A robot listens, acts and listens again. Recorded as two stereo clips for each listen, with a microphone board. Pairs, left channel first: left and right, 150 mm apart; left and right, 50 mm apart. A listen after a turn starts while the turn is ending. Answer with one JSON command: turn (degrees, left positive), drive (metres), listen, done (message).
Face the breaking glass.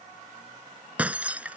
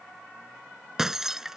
{"turn": -30}
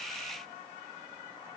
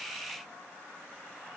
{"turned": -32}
{"listen": true}
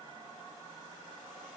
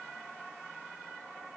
{"done": "I heard breaking glass, but can't make it out now. It was about 20° left or 140° right."}